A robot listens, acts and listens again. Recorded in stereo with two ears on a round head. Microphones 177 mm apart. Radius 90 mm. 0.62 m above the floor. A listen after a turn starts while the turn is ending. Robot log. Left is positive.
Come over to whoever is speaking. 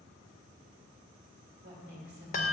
note: The woman speaking: about 50° right or 130° right.
cmd yaw -50
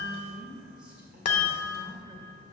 cmd fwd 1.0
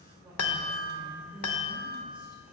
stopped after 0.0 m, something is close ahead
end: Blocked. The woman speaking is further on, straight ahead.